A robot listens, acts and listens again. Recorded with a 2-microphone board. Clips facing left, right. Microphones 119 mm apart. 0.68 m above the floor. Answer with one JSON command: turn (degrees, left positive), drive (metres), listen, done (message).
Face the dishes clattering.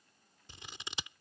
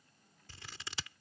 {"listen": true}
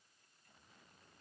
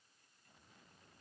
{"listen": true}
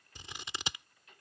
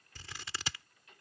{"done": "I can't make out dishes clattering, only scissors."}